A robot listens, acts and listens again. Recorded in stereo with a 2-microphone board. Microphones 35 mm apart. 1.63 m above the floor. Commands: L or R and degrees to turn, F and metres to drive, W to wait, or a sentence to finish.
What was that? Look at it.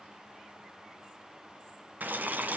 R60
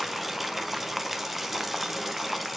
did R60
R10
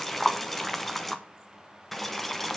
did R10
Facing the boiling, 1 to 2 m away.